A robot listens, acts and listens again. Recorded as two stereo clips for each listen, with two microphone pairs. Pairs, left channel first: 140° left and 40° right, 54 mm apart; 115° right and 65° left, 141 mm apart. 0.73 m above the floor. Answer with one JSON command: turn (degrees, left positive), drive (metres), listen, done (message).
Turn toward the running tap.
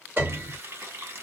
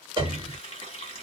{"turn": -75}
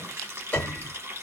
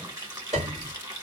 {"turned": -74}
{"done": "Facing the running tap."}